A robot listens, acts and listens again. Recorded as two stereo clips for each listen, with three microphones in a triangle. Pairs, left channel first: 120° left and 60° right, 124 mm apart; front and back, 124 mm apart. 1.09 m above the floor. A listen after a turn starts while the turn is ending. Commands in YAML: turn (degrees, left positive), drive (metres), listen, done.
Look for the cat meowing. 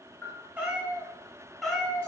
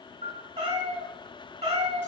turn: -155
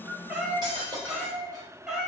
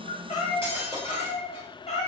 turn: 20
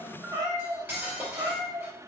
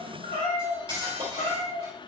turn: -10
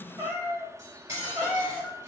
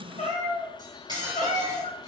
done: "Found it: a cat meowing, straight ahead."